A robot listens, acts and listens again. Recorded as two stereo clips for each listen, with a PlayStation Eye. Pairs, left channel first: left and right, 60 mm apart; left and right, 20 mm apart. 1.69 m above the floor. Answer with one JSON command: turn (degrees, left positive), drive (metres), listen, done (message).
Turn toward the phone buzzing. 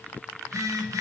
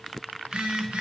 {"turn": -65}
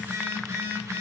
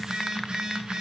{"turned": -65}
{"turn": -50}
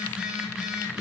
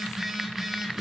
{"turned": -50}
{"turn": -10}
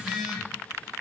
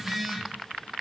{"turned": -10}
{"done": "Facing the phone buzzing."}